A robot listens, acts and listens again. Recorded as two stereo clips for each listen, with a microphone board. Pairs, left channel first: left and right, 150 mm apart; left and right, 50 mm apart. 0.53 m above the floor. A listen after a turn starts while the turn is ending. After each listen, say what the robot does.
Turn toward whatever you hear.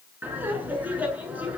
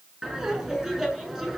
Turn 30° right.
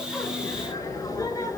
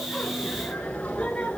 Turn 25° left.
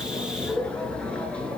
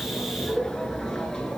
Turn 10° left.
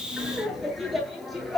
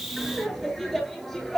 Found it: laughter, straight ahead, over 4 m away.